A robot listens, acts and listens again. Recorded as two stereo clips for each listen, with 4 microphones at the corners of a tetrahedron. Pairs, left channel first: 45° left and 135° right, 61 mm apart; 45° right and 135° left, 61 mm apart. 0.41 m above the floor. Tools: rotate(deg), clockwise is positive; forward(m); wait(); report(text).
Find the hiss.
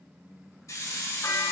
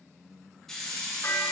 rotate(-40)
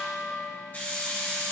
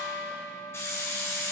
rotate(15)
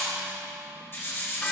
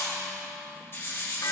report("Found it: a hiss, straight ahead.")